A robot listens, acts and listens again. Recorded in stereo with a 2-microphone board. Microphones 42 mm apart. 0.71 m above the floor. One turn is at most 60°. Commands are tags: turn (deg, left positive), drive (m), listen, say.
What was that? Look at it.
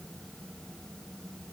<listen/>
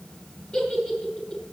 <turn deg="20"/>
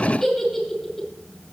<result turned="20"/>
<say>Facing the giggle, over 4 m away.</say>